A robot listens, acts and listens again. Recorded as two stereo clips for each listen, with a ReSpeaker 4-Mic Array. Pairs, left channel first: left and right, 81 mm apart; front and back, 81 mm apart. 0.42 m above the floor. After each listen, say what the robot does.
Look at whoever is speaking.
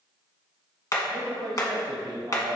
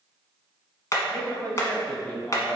Turn 80° right.
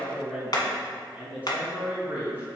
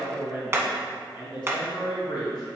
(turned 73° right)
Turn 25° right.
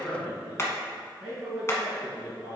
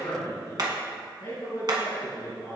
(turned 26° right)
Facing the man speaking.